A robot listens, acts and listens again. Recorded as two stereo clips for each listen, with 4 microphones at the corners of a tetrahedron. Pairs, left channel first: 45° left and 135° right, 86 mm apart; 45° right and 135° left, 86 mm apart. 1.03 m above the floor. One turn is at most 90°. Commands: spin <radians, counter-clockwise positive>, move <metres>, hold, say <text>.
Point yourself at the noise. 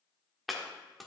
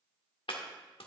spin -0.79
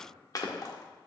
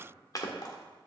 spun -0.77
say Found it: chopping, straight ahead, 1 to 2 m away.